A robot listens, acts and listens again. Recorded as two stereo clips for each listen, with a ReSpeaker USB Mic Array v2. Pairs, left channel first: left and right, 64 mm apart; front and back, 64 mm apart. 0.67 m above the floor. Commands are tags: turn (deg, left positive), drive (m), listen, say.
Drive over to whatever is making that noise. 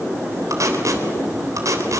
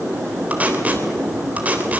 <turn deg="-115"/>
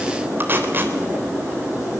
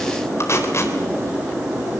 <turn deg="-40"/>
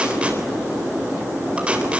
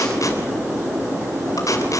<turn deg="-20"/>
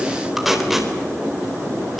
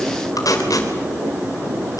<drive m="1.0"/>
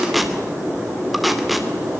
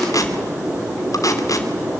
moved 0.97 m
<drive m="1.0"/>
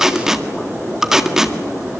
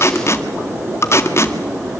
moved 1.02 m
<turn deg="-10"/>
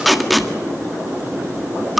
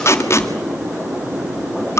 <drive m="1.0"/>
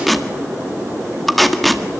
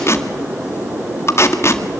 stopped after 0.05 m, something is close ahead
<say>Arrived at the tape being pulled, straight ahead.</say>